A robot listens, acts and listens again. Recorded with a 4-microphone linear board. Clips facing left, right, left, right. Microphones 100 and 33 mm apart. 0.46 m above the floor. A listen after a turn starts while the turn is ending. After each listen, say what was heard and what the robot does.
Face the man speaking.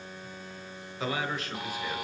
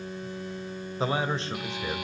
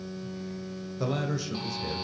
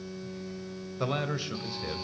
The man speaking: about 20° right or 160° right. Turn 20° right.
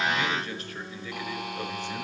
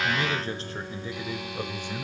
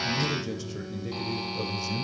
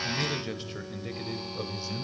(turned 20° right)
Turn 30° right.
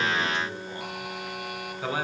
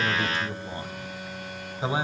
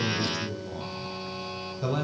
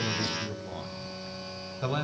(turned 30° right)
The man speaking: about 25° right or 155° right. Turn 25° right.
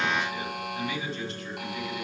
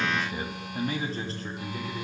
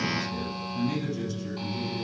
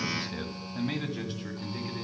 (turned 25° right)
So it is at 145° right. Turn 145° right.
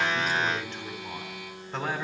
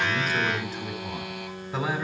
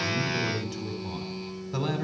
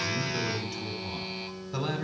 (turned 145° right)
Found it: a man speaking, straight ahead.